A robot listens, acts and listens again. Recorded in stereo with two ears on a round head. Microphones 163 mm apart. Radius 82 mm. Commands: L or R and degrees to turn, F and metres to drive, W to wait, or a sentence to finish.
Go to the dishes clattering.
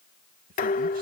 L50
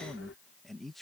W
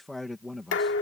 L75
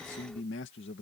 W
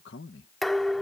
F1.0
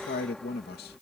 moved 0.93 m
F1.0
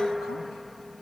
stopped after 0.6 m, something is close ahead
I am next to the dishes clattering.